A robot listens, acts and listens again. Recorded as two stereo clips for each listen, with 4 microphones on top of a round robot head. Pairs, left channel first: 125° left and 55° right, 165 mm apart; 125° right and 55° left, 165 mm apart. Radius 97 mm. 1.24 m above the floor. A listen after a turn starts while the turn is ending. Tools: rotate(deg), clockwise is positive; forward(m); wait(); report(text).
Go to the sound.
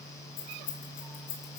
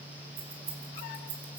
rotate(-85)
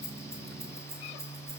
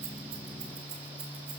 wait()
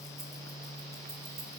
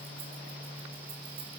wait()
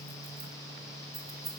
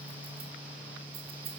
forward(1.0)
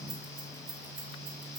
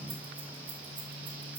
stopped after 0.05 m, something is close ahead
wait()
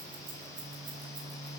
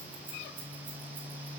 wait()
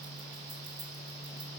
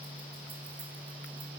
report("Facing where the keys jangling came from. I can't hear it now. I did not reach it.")